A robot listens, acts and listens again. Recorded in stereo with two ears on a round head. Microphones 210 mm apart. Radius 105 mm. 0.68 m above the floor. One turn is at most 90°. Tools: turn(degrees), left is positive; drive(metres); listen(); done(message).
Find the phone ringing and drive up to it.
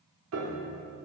listen()
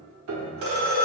turn(degrees=-90)
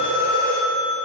turn(degrees=10)
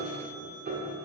listen()
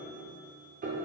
listen()
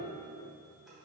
done("I heard a phone ringing from this way, but can't make it out now. I did not reach it.")